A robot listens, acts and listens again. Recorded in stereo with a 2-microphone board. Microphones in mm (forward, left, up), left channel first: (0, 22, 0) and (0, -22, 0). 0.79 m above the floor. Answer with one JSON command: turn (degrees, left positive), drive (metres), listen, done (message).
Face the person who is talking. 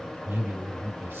{"turn": -55}
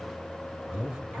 {"turn": -15}
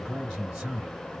{"done": "Found it: a man speaking, straight ahead, 1 to 2 m away."}